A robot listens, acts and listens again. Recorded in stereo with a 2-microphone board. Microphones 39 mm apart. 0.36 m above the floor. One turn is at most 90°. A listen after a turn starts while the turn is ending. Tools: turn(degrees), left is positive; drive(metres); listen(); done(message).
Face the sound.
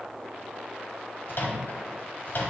turn(degrees=60)
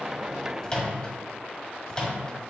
turn(degrees=20)
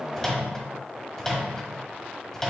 turn(degrees=10)
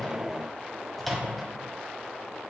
done("Facing the microwave, 1 to 2 m away.")